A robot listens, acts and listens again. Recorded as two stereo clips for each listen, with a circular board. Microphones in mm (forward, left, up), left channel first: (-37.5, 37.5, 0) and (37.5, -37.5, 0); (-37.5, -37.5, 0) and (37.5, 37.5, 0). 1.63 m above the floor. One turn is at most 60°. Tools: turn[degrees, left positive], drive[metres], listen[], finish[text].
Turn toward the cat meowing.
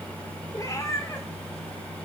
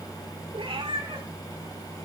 Thought: The cat meowing: 75° left.
Action: turn[60]
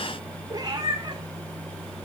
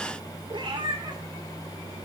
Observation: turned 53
Action: finish[Found it: a cat meowing, straight ahead.]